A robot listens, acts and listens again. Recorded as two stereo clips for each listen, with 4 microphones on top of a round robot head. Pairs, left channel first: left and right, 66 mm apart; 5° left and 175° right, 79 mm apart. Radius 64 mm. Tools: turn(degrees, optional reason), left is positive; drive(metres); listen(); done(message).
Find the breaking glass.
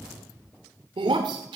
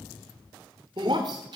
turn(degrees=-125, reason="The breaking glass: 125° right.")
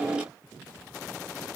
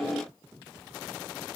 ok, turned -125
done("Facing where the breaking glass came from. I can't hear it now.")